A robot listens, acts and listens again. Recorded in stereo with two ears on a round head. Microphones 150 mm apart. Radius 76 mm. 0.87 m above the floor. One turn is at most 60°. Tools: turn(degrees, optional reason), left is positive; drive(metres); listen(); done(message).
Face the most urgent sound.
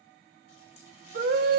turn(degrees=-60, reason="The scream: about 65° right or 115° right.")
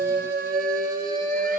turn(degrees=-50, reason="So it is at 50° right.")
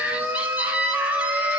turn(degrees=-10, reason="The scream is now 10° right.")
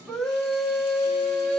done("Facing the scream.")